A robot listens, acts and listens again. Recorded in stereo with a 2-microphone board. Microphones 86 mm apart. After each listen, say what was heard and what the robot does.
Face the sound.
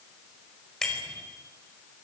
Turn 30° left.
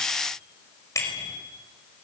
So it is at 145° left. Turn 145° left.
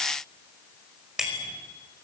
Facing the bicycle bell, over 4 m away.